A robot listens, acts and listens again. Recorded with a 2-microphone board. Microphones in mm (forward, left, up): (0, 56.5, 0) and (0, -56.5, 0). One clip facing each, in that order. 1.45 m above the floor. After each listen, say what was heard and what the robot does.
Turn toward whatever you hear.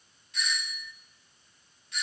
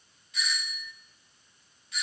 Turn 30° left.
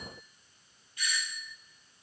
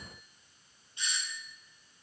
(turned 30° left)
So it is at 30° right. Turn 30° right.
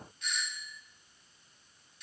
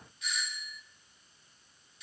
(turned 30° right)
Found it: a doorbell, straight ahead, 1 to 2 m away.